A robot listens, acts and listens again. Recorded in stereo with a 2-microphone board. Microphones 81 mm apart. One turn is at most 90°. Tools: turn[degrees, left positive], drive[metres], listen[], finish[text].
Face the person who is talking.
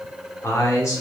Thought: The man speaking: about 40° left or 140° left.
Action: turn[40]
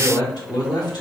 Thought: So it is at 95° left.
Action: turn[90]
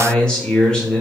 Thought: The man speaking is now 10° left.
Action: turn[10]
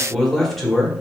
Action: finish[Facing the man speaking.]